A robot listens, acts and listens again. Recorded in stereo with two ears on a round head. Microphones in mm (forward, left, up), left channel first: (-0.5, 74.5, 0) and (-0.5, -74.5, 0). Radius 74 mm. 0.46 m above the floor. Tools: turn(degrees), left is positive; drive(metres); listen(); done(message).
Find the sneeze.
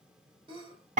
turn(degrees=-35)
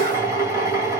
listen()
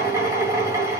done("I heard a sneeze, but can't make it out now. It was about straight ahead or 110° right.")